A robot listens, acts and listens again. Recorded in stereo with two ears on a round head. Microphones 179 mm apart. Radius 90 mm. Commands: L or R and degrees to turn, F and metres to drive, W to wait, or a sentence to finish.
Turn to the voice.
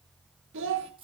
R70
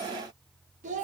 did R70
R35
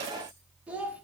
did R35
Facing the child speaking, 1 to 2 m away.